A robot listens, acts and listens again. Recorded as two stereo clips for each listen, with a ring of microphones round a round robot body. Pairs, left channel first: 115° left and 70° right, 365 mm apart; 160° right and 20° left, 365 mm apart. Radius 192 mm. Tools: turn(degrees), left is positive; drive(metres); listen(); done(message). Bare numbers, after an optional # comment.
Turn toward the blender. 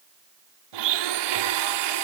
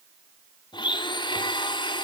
# The blender: 80° right.
turn(-80)
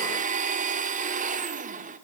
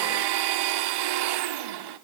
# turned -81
done("Found it: a blender, straight ahead, 2 to 4 m away.")